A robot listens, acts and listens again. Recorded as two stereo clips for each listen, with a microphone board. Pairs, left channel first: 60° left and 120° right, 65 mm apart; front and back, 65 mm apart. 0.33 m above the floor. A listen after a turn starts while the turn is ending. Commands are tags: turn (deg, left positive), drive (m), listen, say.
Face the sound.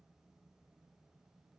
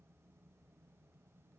<listen/>
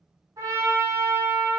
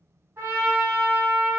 <turn deg="-130"/>
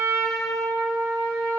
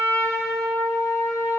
<say>Found it: a trumpet, straight ahead.</say>